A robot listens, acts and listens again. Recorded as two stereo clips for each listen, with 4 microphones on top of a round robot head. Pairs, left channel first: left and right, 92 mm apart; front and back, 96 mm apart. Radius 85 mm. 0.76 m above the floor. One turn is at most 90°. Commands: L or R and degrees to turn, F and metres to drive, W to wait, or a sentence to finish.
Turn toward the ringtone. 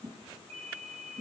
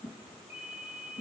R90
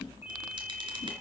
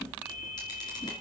R20
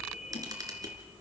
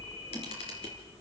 W
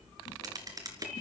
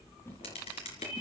Facing the ringtone, over 4 m away.